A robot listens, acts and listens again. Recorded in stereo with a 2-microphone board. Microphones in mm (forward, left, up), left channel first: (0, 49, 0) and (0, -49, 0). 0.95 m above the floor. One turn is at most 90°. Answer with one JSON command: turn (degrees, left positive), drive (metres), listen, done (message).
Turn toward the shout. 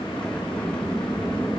{"listen": true}
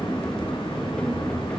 {"listen": true}
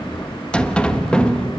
{"done": "I can't make out a shout to turn to."}